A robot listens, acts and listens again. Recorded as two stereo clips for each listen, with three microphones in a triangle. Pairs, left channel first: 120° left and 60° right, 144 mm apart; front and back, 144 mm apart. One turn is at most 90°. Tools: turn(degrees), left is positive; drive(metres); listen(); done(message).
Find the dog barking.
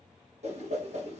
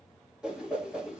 listen()
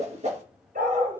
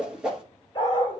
turn(degrees=-60)
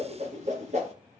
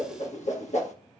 listen()
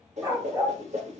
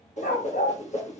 done("Found it: a dog barking, straight ahead, 2 to 4 m away.")